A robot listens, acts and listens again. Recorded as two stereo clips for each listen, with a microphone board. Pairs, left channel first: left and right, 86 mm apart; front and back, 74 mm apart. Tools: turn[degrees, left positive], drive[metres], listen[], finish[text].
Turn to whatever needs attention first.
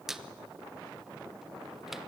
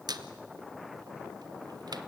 Action: listen[]
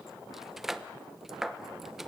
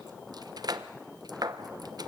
Action: listen[]
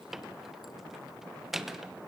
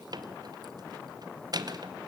Action: finish[I can't make out anything urgent to turn to.]